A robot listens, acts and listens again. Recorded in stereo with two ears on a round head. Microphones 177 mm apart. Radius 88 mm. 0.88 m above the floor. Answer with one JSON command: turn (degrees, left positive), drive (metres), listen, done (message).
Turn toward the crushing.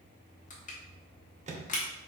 {"turn": 40}
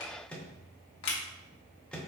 {"turn": 95}
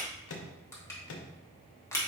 {"turn": 15}
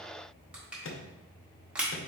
{"done": "Facing the crushing."}